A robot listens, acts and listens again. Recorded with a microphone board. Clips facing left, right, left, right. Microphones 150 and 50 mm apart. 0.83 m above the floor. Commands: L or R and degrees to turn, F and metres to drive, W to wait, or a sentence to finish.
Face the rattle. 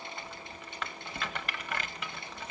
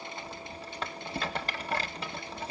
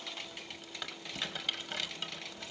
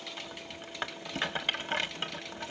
R35
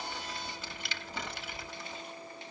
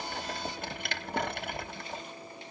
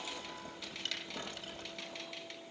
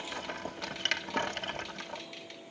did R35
R110
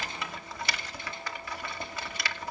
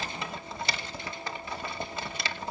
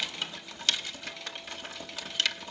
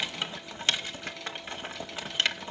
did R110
R30
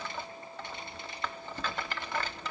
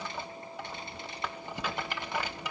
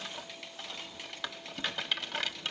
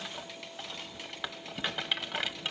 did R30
R15
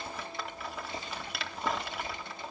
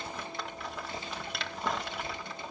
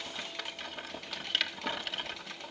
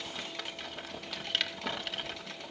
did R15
Facing the rattle.